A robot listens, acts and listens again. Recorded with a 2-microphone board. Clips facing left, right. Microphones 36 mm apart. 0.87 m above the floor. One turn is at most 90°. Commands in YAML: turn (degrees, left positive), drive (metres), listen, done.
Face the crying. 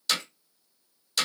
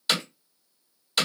listen: true
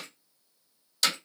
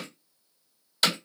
listen: true
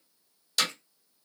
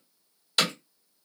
done: "I can't make out crying, only hammering."